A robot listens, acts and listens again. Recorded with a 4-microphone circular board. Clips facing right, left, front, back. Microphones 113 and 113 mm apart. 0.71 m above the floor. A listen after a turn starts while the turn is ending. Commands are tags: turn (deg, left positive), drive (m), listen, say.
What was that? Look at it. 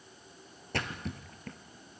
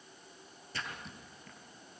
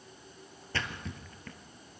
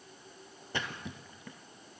<turn deg="-105"/>
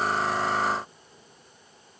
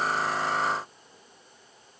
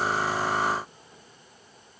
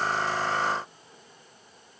<say>I heard a splash from this way, but can't make it out now.</say>